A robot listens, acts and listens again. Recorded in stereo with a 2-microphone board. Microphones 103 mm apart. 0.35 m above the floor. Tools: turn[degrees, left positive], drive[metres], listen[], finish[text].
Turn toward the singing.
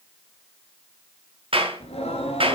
Action: turn[90]
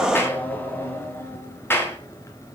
Thought: So it is at 30° left.
Action: turn[30]
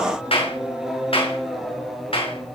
Action: finish[Found it: singing, straight ahead.]